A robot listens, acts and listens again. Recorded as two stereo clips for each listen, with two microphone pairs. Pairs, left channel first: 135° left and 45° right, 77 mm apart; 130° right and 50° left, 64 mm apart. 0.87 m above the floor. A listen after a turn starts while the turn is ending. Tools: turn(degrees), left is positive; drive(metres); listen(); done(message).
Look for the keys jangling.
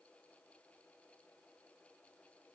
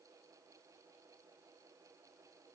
listen()
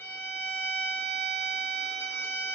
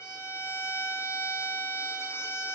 listen()
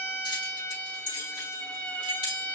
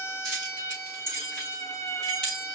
turn(degrees=150)
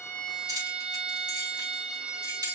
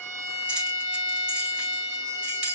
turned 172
turn(degrees=-25)
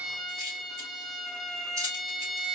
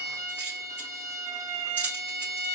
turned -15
turn(degrees=-10)
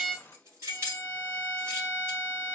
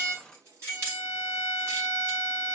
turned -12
done("Found it: keys jangling, straight ahead, over 4 m away.")